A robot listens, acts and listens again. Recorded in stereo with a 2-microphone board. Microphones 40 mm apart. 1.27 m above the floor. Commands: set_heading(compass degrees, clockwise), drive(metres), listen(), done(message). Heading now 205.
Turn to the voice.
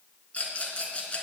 listen()
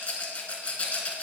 listen()
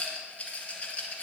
done("I can't make out anyone speaking, only a rattle.")